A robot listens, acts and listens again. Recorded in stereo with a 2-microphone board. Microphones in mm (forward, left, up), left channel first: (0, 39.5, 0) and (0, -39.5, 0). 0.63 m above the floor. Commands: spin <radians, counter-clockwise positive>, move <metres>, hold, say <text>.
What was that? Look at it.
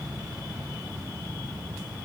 hold
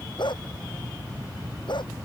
spin 1.57
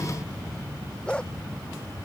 spin 0.17
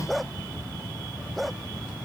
say Facing the dog barking.